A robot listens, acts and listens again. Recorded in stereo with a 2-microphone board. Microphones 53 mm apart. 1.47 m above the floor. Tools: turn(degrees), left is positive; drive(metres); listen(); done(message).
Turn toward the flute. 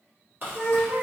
turn(degrees=-20)
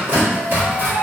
turn(degrees=-135)
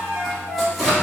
turn(degrees=-35)
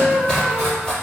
turn(degrees=-15)
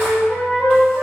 done("Facing the flute, 1 to 2 m away.")